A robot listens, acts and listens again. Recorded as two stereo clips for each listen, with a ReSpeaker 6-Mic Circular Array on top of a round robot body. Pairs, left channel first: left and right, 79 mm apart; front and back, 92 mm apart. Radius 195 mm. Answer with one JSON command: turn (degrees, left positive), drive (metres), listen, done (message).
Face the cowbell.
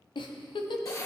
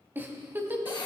{"listen": true}
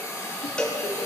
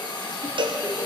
{"turn": 165}
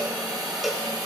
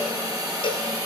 {"done": "Found it: a cowbell, straight ahead."}